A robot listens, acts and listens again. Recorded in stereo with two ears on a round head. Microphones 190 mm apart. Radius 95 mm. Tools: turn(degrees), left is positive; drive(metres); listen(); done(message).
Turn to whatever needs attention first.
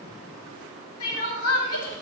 turn(degrees=90)
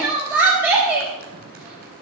turn(degrees=-10)
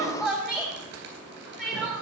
done("Facing the crying.")